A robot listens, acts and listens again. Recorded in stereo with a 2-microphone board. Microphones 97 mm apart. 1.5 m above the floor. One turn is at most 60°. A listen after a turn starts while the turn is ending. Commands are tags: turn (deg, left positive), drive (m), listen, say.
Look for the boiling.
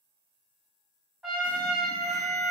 <listen/>
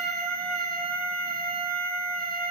<listen/>
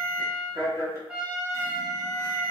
<say>I can't make out boiling to turn to.</say>